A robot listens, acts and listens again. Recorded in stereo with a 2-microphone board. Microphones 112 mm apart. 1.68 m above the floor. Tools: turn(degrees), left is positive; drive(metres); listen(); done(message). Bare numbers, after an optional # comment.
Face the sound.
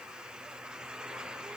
listen()
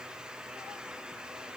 listen()
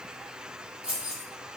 turn(-30)
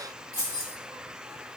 # So it is at 35° left.
turn(35)
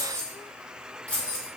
# The keys jangling is now 15° left.
turn(15)
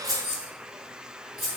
done("Found it: keys jangling, straight ahead, 2 to 4 m away.")